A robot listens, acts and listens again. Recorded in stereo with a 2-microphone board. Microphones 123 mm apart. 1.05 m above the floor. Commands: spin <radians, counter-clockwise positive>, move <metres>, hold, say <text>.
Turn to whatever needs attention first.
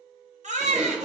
spin -1.57
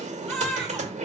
say Found it: a baby crying, straight ahead, 1 to 2 m away.